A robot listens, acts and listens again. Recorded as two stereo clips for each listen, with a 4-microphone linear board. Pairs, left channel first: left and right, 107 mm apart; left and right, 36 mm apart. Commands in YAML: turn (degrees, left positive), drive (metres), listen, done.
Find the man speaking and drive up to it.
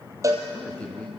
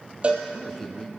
turn: 30
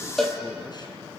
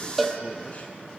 listen: true
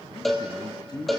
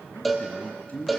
turn: 135
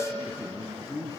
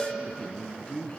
turn: 35
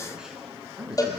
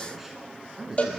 drive: 1.0
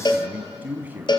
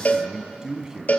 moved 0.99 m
turn: -20
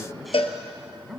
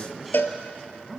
drive: 1.0
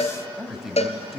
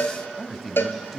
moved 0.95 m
drive: 1.0
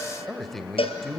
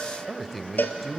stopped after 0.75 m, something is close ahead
done: "Arrived at the man speaking, straight ahead."